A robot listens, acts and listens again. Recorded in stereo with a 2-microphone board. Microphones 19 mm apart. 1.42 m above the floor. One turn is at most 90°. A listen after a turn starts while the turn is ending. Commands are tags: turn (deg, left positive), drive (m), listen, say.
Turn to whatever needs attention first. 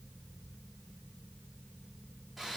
<listen/>
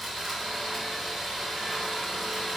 <listen/>
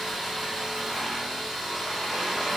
<say>I can't make out anything urgent, only sawing.</say>